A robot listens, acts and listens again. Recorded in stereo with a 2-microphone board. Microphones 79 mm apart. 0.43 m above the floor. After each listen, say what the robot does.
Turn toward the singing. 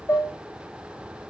Keep listening.
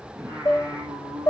Turn 50° right.
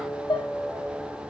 Turn 10° right.
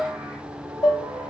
Turn 10° right.
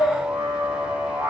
Turn 15° right.
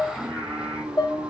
Facing the singing, 2 to 4 m away.